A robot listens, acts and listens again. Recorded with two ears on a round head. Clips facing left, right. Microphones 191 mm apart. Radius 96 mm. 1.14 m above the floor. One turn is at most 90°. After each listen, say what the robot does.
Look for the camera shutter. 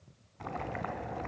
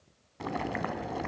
Keep listening.
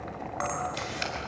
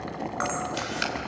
Turn 30° right.
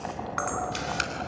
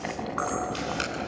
Turn 25° left.
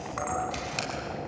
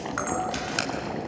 Turn 10° right.
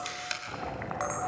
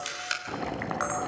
Found it: a camera shutter, straight ahead.